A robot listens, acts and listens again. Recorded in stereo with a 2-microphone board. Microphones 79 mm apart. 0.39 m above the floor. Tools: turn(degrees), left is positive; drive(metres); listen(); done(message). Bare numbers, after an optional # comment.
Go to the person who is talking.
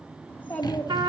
# The child speaking: about 25° left or 155° left.
turn(25)
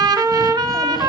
listen()
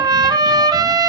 listen()
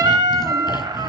done("I heard a child speaking, but can't make it out now. It was about straight ahead or 130° left. I did not reach it.")